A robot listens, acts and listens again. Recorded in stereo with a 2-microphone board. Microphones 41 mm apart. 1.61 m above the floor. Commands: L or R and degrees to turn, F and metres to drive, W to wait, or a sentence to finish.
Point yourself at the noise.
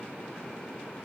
W
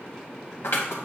L90
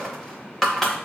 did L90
L10
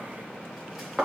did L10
Facing the scissors.